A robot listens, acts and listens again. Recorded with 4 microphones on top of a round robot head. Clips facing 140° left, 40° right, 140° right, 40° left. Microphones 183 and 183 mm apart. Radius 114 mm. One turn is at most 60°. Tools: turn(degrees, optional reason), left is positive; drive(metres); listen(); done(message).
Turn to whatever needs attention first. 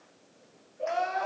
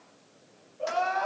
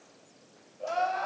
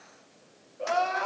turn(degrees=60, reason="The crying: 70° left.")
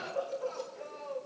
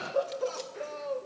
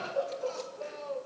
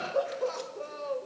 done("Found it: crying, straight ahead.")